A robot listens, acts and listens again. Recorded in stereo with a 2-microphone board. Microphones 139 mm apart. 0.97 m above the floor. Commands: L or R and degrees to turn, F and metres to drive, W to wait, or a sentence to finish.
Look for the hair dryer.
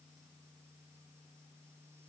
W
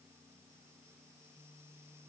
W
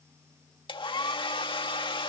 L35
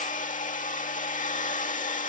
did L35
L105
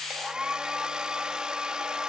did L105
Found it: a hair dryer, straight ahead.